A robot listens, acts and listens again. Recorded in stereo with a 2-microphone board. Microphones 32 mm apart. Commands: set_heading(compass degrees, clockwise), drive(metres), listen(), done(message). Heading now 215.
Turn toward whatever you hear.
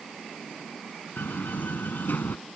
set_heading(125)
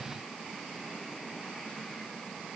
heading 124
done("I heard a door slam from this way, but can't make it out now.")